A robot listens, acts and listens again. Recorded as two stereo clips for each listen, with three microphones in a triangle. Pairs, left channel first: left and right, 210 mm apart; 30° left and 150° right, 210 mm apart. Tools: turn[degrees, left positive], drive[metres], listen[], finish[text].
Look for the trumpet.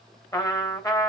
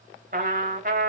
Thought: The trumpet: 165° left.
Action: turn[165]
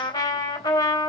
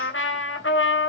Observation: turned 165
Thought: The trumpet is now 20° left.
Action: turn[20]
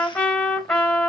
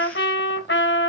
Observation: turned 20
Action: finish[Facing the trumpet.]